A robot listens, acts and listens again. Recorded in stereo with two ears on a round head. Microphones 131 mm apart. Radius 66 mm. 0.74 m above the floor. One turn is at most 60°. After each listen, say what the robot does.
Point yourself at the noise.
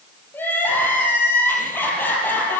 Turn 30° left.
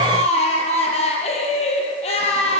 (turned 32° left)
Turn 60° left.
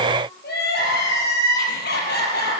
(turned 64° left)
Turn 60° left.
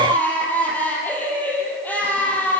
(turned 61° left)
Turn 10° left.
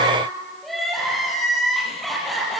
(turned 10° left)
Found it: crying, straight ahead, over 4 m away.